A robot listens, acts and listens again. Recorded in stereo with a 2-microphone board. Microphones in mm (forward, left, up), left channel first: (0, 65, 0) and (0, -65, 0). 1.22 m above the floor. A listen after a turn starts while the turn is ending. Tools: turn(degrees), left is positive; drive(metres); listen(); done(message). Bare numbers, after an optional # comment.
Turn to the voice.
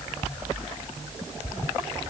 listen()
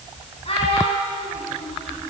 # The child speaking: about 45° left or 135° left.
turn(45)
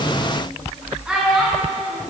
# So it is at 10° right.
turn(-10)
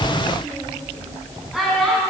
done("Facing the child speaking, over 4 m away.")